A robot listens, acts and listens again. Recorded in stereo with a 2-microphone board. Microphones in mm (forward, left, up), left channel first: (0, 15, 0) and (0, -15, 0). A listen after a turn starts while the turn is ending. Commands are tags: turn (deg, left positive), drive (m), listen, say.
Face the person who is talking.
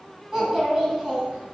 <turn deg="-30"/>
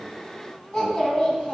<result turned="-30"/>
<turn deg="15"/>
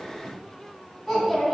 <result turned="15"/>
<say>Facing the child speaking.</say>